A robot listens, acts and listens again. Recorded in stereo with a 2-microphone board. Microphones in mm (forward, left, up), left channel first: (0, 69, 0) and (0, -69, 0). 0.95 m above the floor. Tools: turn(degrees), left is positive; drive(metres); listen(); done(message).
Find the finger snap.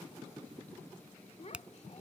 turn(degrees=-30)
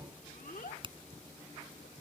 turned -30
turn(degrees=-145)
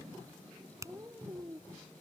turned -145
turn(degrees=-20)
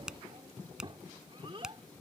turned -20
done("Found it: a finger snap, straight ahead.")